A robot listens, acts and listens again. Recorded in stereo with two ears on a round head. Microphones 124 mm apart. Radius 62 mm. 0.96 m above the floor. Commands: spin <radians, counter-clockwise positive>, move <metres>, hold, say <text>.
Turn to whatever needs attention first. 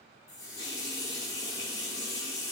hold
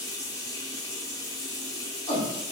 spin 0.44
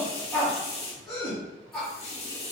say Facing the shout, 1 to 2 m away.